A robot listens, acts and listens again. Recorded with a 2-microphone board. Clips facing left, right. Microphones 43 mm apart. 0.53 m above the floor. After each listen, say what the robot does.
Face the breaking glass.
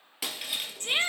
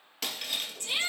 Turn 30° left.
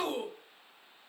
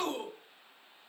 Keep listening.
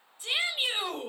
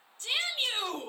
I heard breaking glass, but can't make it out now. It was about 25° right or 145° left.